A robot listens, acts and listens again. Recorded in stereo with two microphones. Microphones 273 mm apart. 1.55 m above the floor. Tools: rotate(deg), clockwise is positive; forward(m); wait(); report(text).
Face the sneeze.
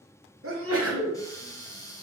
rotate(55)
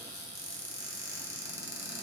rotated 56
wait()
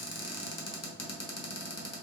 report("I heard a sneeze, but can't make it out now. It was about straight ahead or 70° right.")